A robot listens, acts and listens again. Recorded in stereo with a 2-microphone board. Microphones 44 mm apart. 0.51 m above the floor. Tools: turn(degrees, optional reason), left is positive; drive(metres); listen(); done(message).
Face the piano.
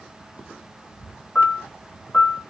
turn(degrees=20, reason="The piano: about 20° left or 160° left.")
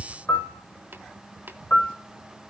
turn(degrees=140, reason="So it is at 140° left.")
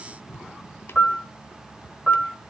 done("Found it: a piano, straight ahead, 2 to 4 m away.")